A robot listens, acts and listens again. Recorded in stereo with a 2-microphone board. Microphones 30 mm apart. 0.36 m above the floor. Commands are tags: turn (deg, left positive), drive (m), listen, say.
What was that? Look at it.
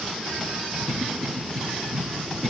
<turn deg="30"/>
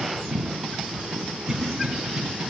<turn deg="-15"/>
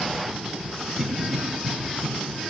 <say>Found it: a cough, straight ahead.</say>